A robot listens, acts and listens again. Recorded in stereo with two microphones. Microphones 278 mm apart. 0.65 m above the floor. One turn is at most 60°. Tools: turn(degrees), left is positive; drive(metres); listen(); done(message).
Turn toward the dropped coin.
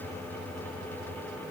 listen()
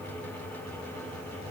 listen()
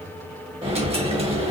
turn(degrees=-20)
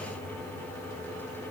listen()
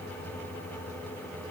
done("I heard a dropped coin, but can't make it out now. It was about straight ahead or 140° right.")